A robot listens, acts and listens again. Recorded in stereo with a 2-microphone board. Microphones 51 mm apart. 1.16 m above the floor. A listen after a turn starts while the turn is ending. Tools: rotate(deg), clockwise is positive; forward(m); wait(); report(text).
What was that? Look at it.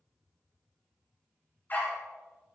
rotate(-35)
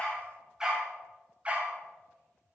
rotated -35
rotate(25)
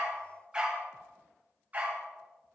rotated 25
rotate(30)
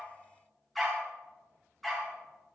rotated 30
report("Facing the dog barking.")